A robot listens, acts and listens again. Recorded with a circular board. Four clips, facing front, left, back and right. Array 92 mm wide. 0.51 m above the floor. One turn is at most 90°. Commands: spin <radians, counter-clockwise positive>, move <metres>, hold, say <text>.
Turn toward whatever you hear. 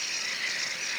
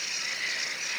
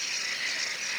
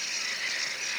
hold
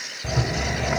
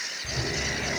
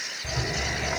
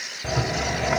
spin -1.22
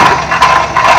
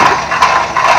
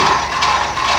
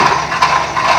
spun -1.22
spin 0.44
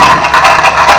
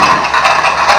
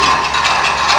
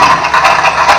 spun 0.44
say Found it: a rattle, straight ahead.